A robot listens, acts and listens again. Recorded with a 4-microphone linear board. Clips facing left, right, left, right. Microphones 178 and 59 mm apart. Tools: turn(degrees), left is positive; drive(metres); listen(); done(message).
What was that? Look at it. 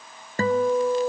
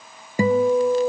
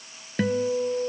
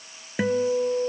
turn(degrees=-30)
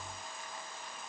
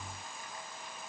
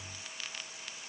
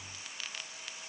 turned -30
listen()
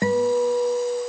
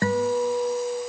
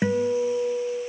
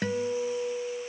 turn(degrees=20)
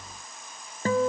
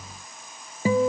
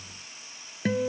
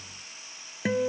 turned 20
turn(degrees=-10)
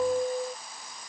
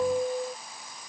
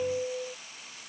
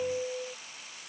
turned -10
done("Facing the guitar.")